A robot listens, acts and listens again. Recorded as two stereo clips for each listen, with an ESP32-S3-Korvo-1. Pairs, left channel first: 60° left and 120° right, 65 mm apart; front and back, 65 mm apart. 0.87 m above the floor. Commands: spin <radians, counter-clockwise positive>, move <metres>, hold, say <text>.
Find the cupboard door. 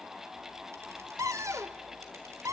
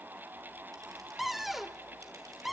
spin -1.66
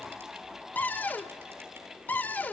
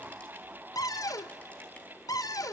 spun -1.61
say Facing the cupboard door.